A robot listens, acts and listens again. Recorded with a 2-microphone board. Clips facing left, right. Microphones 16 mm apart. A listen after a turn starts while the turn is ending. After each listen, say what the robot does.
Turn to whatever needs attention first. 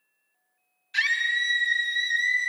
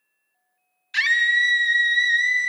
Turn 30° right.
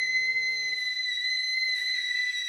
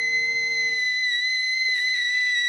Turn 115° right.
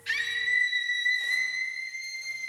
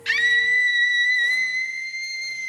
Turn 35° right.
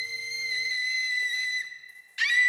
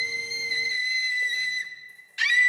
Facing the scream, under 1 m away.